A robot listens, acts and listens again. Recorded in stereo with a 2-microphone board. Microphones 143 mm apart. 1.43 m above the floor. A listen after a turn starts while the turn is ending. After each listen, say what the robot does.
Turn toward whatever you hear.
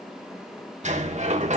Turn 55° right.
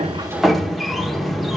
Found it: a sliding door, straight ahead, 1 to 2 m away.